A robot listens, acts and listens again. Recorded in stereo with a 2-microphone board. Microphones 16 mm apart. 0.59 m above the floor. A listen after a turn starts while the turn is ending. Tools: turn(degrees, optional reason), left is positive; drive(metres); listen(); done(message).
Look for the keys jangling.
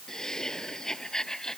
listen()
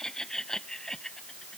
listen()
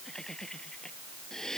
done("I can't make out keys jangling to turn to.")